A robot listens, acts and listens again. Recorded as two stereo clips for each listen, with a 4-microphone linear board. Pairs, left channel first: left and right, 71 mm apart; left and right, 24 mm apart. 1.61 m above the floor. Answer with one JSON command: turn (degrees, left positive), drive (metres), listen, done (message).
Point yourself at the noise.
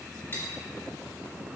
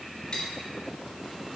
{"turn": 35}
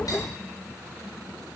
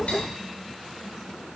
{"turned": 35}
{"turn": 110}
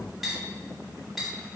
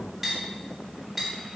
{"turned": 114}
{"done": "Facing the cutlery clinking."}